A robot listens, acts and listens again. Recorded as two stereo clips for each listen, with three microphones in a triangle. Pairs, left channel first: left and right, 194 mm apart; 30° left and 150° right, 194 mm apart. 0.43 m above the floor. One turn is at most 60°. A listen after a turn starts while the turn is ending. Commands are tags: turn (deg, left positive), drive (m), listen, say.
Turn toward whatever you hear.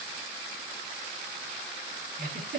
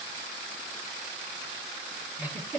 <turn deg="-60"/>
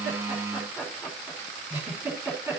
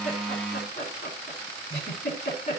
<turn deg="-10"/>
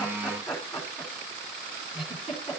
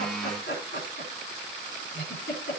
<say>Facing the giggle.</say>